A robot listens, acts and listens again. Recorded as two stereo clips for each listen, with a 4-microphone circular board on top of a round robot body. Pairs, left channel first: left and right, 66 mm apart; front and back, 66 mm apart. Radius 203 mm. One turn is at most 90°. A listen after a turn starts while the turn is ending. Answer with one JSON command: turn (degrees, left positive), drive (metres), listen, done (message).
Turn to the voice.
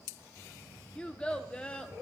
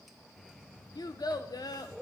{"turn": 15}
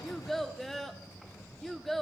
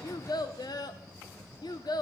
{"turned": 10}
{"done": "Found it: a child speaking, straight ahead."}